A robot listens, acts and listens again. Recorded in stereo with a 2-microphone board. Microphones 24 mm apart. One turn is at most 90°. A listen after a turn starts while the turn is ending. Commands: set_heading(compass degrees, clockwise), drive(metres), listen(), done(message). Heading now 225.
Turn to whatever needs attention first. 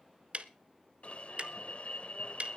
set_heading(170)
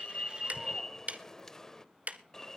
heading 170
set_heading(145)
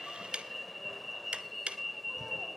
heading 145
done("Found it: an alarm, straight ahead.")